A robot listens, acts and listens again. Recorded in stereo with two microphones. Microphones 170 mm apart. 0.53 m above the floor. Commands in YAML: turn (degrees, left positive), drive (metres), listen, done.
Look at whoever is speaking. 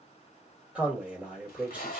turn: -30
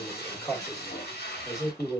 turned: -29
turn: 20
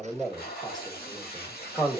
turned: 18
done: "Facing the man speaking."